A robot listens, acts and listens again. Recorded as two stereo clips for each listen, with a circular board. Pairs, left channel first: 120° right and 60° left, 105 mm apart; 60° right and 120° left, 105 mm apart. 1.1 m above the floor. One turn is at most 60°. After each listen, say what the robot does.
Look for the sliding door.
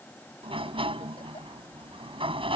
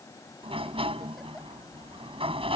Turn 60° left.
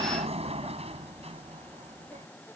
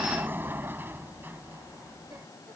Turn 50° left.
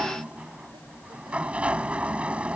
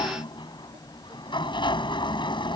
Turn 20° right.
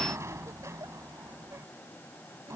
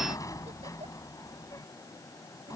Facing the sliding door.